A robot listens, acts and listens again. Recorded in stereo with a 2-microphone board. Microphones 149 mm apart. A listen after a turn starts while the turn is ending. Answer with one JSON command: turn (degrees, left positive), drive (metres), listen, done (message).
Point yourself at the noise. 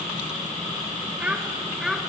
{"turn": 30}
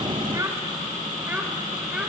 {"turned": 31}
{"turn": -30}
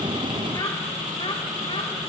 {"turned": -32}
{"listen": true}
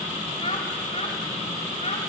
{"turn": 50}
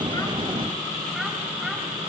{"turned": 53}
{"listen": true}
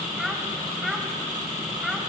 {"done": "Found it: a child speaking, straight ahead."}